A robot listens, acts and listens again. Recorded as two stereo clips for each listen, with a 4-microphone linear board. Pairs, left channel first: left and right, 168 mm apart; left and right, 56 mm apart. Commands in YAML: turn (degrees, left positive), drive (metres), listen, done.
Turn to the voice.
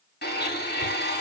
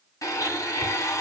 listen: true
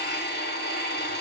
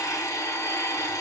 listen: true
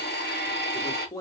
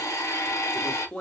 turn: 20
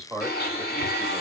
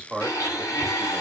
done: "Facing the man speaking, 1 to 2 m away."